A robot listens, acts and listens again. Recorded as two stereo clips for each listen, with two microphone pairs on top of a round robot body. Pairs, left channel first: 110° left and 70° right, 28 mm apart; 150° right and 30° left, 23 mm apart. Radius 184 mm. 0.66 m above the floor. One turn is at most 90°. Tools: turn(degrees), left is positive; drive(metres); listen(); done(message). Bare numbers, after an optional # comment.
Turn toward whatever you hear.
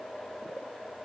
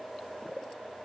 listen()
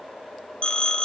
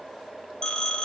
# The phone ringing: 155° left.
turn(90)
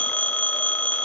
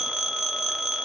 # The phone ringing is now 105° left.
turn(90)
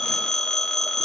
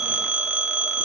# The phone ringing is now 45° left.
turn(45)
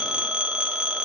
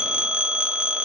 # The phone ringing is now 10° right.
turn(-10)
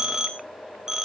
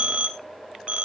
done("Found it: a phone ringing, straight ahead, 2 to 4 m away.")